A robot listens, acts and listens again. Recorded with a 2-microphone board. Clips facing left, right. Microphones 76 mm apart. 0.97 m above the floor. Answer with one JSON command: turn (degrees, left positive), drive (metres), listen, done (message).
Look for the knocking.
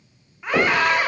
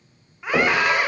{"turn": -20}
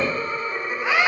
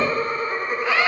{"listen": true}
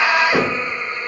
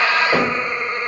{"turn": -140}
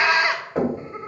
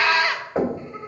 {"done": "Found it: knocking, straight ahead, 2 to 4 m away."}